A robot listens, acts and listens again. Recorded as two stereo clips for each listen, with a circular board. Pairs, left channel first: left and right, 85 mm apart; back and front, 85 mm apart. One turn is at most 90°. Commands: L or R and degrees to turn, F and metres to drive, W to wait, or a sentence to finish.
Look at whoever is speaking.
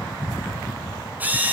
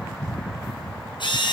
W
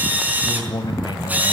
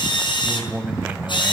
L70
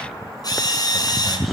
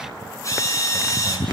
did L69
W
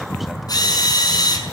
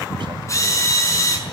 W
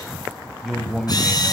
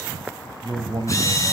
Found it: a man speaking, straight ahead, 2 to 4 m away.